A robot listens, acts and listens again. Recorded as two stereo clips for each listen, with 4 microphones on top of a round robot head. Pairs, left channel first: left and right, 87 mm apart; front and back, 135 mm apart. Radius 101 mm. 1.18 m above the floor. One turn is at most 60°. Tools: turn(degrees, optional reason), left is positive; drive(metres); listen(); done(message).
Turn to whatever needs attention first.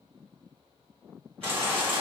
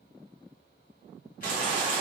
turn(degrees=-60, reason="The baby crying: 155° right.")
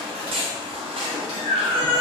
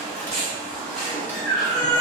turn(degrees=-60, reason="The baby crying is now 85° right.")
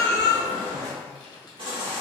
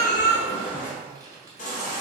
turn(degrees=-40, reason="The baby crying is now 40° right.")
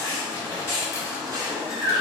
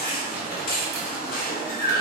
turn(degrees=-20, reason="The baby crying is now 20° right.")
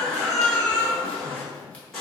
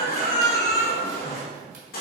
done("Facing the baby crying, under 1 m away.")